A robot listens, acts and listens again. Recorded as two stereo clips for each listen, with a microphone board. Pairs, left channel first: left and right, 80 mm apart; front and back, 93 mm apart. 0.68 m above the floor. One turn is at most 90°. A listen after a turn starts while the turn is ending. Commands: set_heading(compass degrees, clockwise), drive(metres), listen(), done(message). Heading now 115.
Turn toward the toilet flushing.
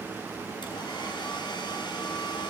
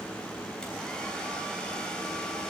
listen()
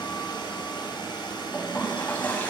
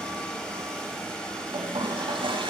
set_heading(25)
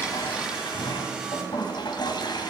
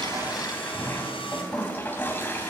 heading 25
set_heading(315)
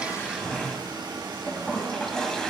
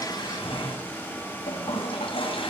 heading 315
set_heading(305)
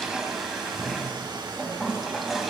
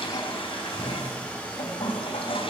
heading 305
done("Found it: a toilet flushing, straight ahead.")